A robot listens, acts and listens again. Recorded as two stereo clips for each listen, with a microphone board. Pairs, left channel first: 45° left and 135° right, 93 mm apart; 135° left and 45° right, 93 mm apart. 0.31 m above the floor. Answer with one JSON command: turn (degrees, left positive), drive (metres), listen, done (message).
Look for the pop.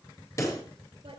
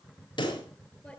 {"turn": 100}
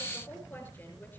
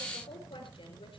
{"done": "I heard a pop from this way, but can't make it out now."}